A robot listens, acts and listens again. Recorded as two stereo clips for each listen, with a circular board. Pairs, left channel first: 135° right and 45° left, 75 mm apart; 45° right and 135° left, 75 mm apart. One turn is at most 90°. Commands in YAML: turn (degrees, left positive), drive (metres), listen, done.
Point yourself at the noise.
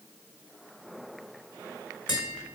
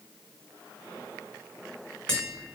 turn: -90
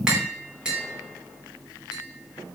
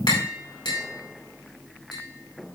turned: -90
turn: -35
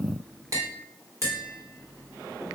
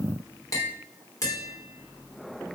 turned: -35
done: "Facing the tapping, over 4 m away."